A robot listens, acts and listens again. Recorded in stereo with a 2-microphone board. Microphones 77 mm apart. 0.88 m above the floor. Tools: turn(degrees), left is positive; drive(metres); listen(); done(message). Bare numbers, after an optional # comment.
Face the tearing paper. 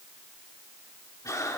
listen()
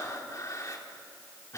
listen()
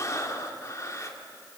done("I can't make out tearing paper to turn to.")